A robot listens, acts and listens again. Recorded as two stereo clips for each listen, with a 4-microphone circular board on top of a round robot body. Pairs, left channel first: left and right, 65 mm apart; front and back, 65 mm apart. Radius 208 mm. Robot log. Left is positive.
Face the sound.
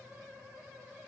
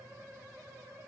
cmd idle
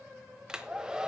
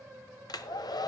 note: The hair dryer: 10° right.
cmd yaw -10
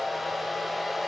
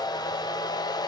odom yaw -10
end: Facing the hair dryer, 1 to 2 m away.